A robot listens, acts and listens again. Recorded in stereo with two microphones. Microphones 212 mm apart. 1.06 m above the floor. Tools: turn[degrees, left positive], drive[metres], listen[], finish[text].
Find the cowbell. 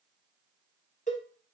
Thought: The cowbell: about 40° left or 140° left.
Action: turn[40]
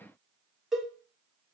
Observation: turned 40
Action: finish[Facing the cowbell.]